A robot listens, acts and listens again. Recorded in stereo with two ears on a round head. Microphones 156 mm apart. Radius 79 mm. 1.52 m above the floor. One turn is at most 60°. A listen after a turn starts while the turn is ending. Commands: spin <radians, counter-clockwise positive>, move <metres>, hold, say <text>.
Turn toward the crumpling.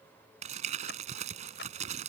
spin -0.79
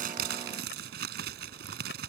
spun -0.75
spin -1.05
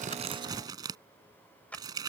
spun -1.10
spin -0.44
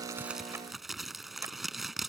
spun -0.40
say Facing the crumpling.